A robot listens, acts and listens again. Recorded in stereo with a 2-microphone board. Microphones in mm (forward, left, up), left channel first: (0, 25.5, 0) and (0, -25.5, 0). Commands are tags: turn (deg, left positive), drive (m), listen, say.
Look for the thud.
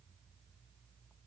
<listen/>
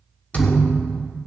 <turn deg="35"/>
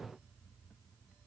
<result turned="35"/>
<listen/>
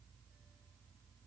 <say>I heard a thud, but can't make it out now. It was about straight ahead or 110° left.</say>